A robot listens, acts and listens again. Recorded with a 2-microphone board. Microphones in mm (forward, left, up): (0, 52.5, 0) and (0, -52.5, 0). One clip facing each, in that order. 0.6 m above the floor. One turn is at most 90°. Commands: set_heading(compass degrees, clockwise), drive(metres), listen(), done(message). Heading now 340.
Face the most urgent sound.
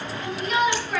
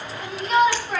set_heading(20)
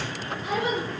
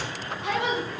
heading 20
set_heading(110)
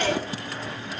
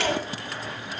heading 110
set_heading(135)
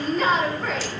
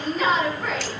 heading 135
done("Facing the shout.")